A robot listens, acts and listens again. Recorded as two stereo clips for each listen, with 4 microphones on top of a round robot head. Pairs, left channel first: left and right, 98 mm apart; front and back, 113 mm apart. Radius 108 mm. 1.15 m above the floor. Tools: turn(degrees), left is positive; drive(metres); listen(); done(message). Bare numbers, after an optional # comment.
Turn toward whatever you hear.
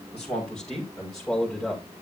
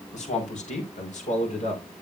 done("Found it: a man speaking, straight ahead.")